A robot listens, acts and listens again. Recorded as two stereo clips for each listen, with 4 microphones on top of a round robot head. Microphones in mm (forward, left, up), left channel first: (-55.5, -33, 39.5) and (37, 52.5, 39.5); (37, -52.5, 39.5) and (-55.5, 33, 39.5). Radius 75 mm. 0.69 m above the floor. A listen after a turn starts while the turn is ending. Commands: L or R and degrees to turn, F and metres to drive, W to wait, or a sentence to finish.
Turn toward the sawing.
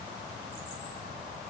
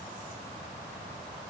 W
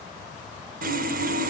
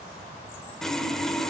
L45
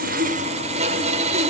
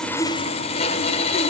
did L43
Found it: sawing, straight ahead.